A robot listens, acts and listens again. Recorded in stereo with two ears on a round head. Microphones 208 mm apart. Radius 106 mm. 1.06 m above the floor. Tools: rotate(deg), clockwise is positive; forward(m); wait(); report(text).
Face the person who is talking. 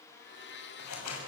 wait()
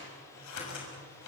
wait()
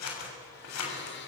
report("I can't make out anyone speaking to turn to.")